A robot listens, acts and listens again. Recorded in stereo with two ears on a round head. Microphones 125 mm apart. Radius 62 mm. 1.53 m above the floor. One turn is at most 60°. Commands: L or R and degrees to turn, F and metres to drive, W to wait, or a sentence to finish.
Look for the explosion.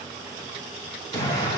L25
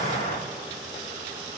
L60
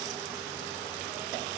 L60
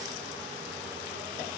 Facing where the explosion came from. I can't hear it now.